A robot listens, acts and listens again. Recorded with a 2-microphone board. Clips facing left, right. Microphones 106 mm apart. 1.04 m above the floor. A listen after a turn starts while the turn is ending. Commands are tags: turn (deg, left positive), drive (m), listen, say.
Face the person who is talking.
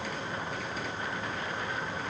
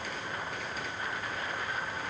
<listen/>
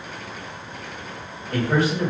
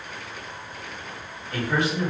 <turn deg="40"/>
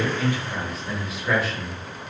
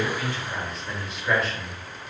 <say>Facing the man speaking, 1 to 2 m away.</say>